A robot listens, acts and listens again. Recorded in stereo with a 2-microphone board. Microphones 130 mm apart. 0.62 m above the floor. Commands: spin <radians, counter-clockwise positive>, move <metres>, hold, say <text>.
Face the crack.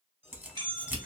spin -0.26
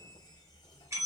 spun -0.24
hold
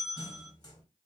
say I heard a crack, but can't make it out now. It was about straight ahead or 150° right.